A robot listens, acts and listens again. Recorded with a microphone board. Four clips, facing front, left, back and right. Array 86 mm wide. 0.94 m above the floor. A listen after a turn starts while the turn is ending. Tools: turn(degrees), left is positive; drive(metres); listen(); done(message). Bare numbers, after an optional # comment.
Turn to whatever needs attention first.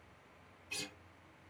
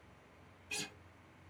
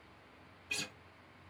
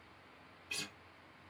listen()
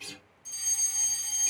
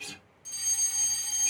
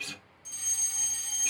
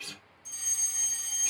# The fire alarm: 110° left.
turn(110)
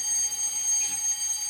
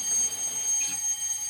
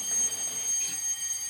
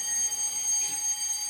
done("Found it: a fire alarm, straight ahead.")